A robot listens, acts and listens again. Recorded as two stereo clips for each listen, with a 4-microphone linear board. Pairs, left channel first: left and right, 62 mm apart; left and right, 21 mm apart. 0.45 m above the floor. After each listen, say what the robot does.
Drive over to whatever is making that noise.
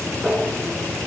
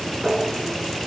Turn 30° left.
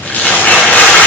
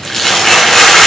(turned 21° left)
Turn 155° left.
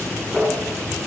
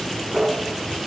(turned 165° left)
Turn 10° right.
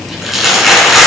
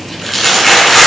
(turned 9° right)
Drive 1.0 m forward.
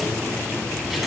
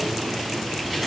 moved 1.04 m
Keep listening.
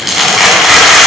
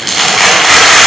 Drive 1.0 m forward.
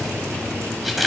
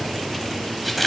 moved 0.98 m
Drive 1.0 m forward.
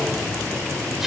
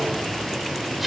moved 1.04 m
Keep listening.
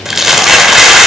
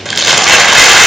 Drive 1.0 m forward.
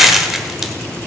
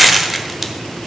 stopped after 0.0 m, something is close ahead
I am next to the crumpling.